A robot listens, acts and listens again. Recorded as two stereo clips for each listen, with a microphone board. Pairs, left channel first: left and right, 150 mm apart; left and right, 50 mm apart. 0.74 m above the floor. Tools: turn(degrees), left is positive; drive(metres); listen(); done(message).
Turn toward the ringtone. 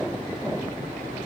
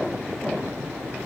listen()
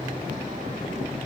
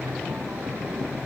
listen()
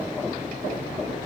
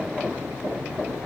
done("I can't make out a ringtone to turn to.")